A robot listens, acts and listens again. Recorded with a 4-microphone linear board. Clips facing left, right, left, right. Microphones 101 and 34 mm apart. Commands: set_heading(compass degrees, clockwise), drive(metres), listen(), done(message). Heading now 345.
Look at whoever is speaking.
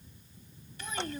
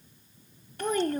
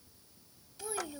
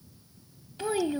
set_heading(35)
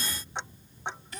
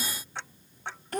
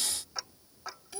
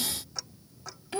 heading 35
set_heading(100)
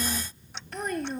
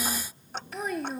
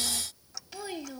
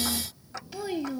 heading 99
done("Found it: a child speaking, straight ahead.")